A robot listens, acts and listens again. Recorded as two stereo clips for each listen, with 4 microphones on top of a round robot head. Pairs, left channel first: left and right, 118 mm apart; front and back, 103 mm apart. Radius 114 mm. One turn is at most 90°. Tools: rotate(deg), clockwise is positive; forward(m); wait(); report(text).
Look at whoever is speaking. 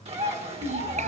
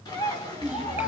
rotate(90)
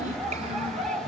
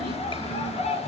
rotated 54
rotate(45)
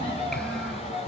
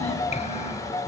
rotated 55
rotate(-10)
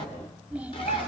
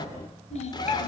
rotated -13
report("Facing the child speaking.")